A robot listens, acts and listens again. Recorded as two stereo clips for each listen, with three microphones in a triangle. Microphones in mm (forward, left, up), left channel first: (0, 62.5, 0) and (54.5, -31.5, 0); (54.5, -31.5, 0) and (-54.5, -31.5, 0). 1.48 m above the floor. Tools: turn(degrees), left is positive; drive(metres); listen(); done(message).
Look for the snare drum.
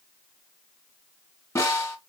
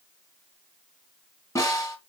turn(degrees=60)
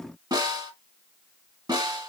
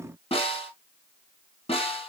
turn(degrees=-10)
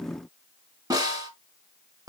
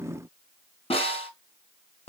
turn(degrees=-10)
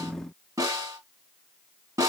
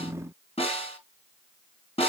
done("Facing the snare drum.")